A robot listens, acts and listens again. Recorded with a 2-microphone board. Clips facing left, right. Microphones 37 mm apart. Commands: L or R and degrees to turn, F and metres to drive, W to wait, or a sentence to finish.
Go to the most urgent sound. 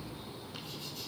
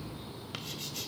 W
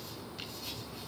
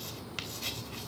W
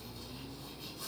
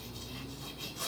I can't make out anything urgent to turn to.